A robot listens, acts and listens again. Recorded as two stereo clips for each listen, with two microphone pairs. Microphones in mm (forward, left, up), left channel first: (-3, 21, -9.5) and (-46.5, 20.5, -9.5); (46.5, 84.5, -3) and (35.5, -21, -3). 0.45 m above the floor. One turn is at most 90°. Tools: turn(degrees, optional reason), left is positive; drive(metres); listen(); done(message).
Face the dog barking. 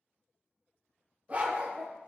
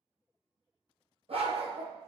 turn(degrees=-90, reason="The dog barking: 120° right.")
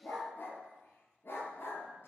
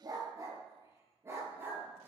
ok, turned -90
turn(degrees=-25, reason="The dog barking is now 25° right.")
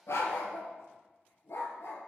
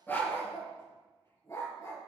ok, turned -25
turn(degrees=25, reason="The dog barking is now 25° left.")
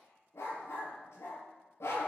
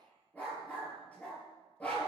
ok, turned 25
turn(degrees=10, reason="The dog barking is now 10° left.")
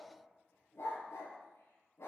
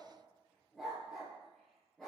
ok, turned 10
done("Found it: a dog barking, straight ahead.")